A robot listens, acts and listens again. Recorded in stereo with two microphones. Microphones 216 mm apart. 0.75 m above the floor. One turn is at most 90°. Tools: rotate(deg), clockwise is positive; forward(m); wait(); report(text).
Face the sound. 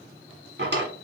rotate(55)
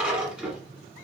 report("Found it: a drawer, straight ahead.")